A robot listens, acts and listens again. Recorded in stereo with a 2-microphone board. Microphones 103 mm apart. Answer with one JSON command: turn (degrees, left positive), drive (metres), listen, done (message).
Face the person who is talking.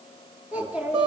{"turn": -30}
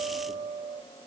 {"listen": true}
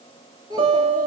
{"turn": -140}
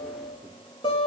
{"listen": true}
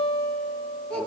{"done": "Facing the child speaking, over 4 m away."}